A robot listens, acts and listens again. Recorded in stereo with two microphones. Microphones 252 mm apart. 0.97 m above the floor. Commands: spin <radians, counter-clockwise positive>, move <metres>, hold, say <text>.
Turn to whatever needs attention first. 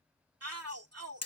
spin -1.57
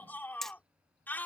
spin 0.17
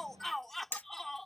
say Facing the shout.